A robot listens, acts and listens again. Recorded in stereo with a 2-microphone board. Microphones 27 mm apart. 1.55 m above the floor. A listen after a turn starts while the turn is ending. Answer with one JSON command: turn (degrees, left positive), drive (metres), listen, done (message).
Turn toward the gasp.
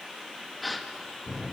{"turn": 30}
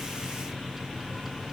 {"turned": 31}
{"listen": true}
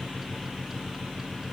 {"done": "I heard a gasp, but can't make it out now. It was about 30° right or 150° left."}